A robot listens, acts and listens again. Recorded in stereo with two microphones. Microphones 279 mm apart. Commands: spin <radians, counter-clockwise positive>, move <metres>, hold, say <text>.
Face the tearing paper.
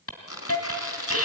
spin 1.05
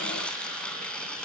say Found it: tearing paper, straight ahead.